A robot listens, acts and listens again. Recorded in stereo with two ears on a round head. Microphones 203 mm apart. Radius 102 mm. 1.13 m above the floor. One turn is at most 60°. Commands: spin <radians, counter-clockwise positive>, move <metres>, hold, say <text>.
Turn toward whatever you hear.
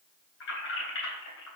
spin 1.05
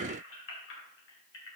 spin 0.96
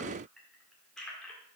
say Facing the keys jangling.